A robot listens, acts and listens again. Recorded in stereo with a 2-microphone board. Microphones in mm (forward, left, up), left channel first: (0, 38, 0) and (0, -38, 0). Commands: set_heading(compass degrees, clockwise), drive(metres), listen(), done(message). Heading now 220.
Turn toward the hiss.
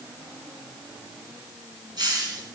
set_heading(285)
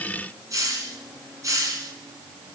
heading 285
set_heading(330)
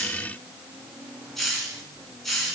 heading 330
done("Found it: a hiss, straight ahead, 2 to 4 m away.")